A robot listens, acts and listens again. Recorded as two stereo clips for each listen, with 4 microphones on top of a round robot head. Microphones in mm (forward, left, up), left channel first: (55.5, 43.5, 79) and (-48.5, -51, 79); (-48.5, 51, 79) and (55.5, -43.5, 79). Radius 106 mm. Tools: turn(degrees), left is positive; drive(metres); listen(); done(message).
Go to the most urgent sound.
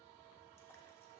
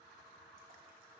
listen()
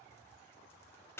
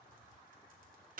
listen()
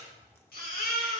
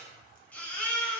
turn(degrees=60)
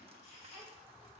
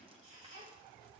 drive(metres=1.0)
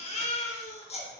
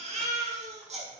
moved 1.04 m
drive(metres=1.0)
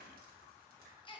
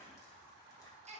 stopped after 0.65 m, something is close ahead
turn(degrees=-10)
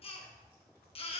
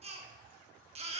done("Arrived at the baby crying, straight ahead.")